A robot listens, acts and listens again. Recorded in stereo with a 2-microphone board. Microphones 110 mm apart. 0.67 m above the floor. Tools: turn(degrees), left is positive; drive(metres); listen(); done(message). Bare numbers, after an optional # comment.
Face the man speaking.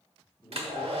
# The man speaking: about 25° left or 155° left.
turn(25)
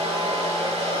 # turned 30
listen()
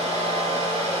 listen()
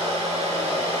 done("I heard a man speaking, but can't make it out now. It was about 5° right or 125° left.")